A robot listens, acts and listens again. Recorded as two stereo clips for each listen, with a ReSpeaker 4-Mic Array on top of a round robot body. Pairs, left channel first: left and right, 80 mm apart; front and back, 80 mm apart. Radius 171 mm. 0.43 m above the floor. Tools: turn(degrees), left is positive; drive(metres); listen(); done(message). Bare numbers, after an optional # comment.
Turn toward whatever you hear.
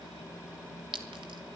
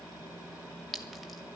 # The clink: 90° right.
turn(-90)
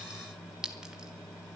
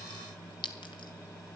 # The clink is now 10° right.
turn(-10)
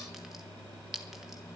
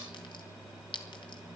done("Found it: a clink, straight ahead.")